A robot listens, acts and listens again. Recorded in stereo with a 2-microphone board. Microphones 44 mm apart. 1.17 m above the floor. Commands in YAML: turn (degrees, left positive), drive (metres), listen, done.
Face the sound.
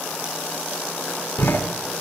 turn: 50
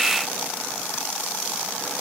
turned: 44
listen: true
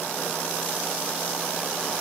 done: "I heard a door slam, but can't make it out now. It was about 5° left or 85° left."